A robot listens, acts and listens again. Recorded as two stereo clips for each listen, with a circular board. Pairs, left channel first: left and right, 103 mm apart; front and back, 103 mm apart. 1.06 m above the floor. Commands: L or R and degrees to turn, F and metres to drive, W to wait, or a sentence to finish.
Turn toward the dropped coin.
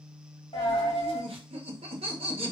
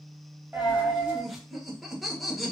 L105
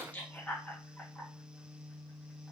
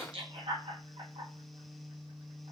I heard a dropped coin from this way, but can't make it out now.